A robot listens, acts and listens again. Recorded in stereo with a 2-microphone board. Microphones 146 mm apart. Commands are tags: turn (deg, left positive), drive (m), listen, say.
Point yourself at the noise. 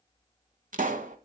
<turn deg="-70"/>
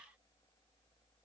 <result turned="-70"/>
<listen/>
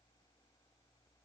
<say>I heard a pop, but can't make it out now. It was about straight ahead or 40° right.</say>